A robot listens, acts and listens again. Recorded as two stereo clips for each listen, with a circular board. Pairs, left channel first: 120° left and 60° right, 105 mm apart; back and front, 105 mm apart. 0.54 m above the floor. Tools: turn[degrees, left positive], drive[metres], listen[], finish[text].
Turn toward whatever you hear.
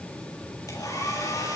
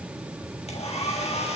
Thought: The hair dryer: straight behind.
Action: turn[180]
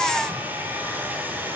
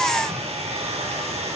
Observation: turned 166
Thought: The hair dryer is now 10° left.
Action: turn[10]
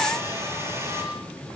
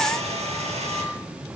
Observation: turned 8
Action: finish[Found it: a hair dryer, straight ahead.]